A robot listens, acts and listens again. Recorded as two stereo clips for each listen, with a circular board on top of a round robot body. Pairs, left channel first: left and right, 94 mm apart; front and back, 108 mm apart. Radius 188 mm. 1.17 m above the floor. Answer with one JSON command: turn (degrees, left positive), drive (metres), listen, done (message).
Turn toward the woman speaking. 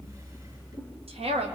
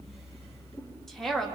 {"turn": -85}
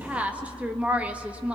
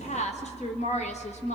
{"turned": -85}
{"turn": -10}
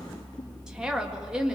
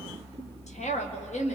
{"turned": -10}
{"done": "Found it: a woman speaking, straight ahead."}